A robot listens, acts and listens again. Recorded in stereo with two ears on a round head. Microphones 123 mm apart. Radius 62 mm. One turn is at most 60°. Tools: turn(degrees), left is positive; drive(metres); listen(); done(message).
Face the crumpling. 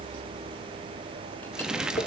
turn(degrees=-30)
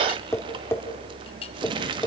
turn(degrees=-60)
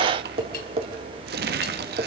turn(degrees=-60)
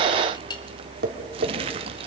turn(degrees=-40)
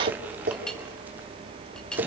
listen()
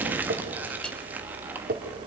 turn(degrees=-10)
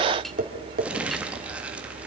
turn(degrees=-10)
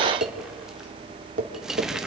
listen()
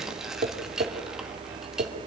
listen()
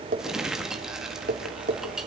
done("Found it: crumpling, straight ahead.")